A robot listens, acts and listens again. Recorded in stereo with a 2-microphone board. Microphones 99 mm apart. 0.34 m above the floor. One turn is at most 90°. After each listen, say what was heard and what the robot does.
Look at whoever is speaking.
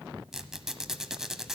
Keep listening.
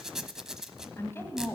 The woman speaking: about 25° left or 155° left. Turn 25° left.
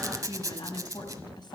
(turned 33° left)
So it is at 115° left. Turn 90° left.
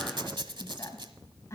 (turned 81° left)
The woman speaking is now 35° left. Turn 35° left.
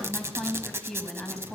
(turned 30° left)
Facing the woman speaking, 2 to 4 m away.